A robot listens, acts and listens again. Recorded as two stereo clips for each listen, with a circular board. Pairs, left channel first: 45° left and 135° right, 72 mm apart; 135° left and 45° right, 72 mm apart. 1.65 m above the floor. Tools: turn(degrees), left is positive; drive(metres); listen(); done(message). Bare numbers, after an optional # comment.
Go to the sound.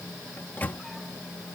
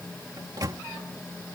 # The microwave: 20° right.
turn(-20)
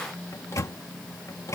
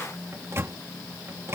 drive(1.0)
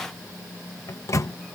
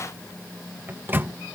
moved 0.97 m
# The microwave is now 10° left.
turn(10)
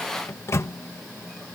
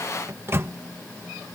drive(1.0)
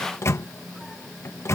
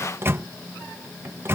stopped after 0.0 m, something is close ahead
done("I am next to the microwave.")